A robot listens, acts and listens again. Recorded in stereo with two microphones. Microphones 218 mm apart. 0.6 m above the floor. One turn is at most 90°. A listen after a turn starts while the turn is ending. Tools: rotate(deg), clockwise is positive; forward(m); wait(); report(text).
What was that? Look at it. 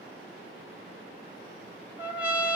rotate(30)
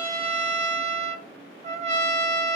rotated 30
rotate(90)
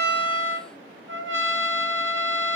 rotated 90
rotate(80)
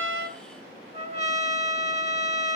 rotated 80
rotate(35)
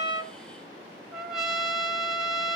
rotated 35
report("Facing the trumpet.")